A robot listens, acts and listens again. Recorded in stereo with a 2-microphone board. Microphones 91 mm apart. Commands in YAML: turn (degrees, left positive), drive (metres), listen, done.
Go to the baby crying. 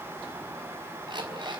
listen: true
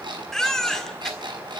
turn: 30
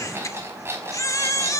turn: 145
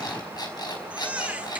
turn: -15
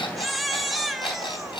drive: 1.0
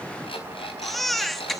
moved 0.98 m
drive: 1.0
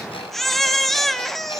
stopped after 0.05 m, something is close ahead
done: "I am next to the baby crying."